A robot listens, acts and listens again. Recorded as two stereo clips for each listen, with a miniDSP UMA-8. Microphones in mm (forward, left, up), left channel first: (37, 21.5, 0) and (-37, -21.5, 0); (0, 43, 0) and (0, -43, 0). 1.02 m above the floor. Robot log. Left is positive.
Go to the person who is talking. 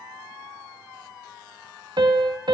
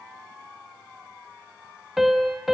cmd idle
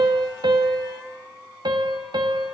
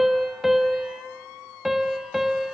cmd idle
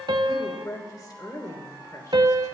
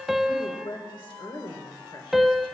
note: The woman speaking: 75° left.
cmd yaw +75
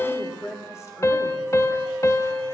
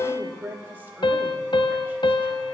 note: The woman speaking is now 25° right.
cmd yaw -25
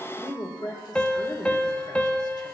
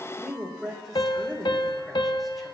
cmd fwd 1.0
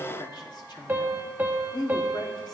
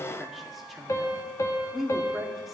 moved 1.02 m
cmd fwd 1.0
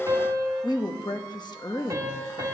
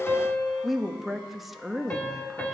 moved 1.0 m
cmd fwd 1.0
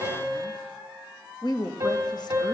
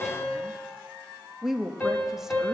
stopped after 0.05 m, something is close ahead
end: Arrived at the woman speaking, straight ahead.